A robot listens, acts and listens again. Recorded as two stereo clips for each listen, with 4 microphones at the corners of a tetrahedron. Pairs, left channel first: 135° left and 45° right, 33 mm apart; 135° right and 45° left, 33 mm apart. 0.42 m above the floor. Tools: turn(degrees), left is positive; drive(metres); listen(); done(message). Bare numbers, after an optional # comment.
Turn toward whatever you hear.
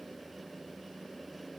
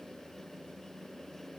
listen()
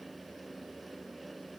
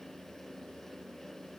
listen()
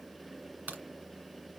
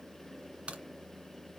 done("Found it: a crack, straight ahead.")